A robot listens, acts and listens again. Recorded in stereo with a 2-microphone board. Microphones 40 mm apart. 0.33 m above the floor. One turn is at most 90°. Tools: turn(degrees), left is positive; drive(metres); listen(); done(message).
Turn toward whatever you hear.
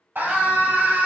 turn(degrees=-55)
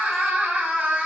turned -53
turn(degrees=-55)
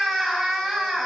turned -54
done("Facing the scream, 1 to 2 m away.")